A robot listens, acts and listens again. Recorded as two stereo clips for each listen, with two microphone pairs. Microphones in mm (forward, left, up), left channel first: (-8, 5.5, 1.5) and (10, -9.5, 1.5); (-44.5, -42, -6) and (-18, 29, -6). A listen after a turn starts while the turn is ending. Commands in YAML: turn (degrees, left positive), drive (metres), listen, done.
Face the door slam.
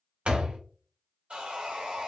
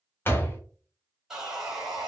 turn: -55
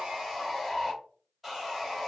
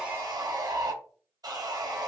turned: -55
done: "I heard a door slam from this way, but can't make it out now."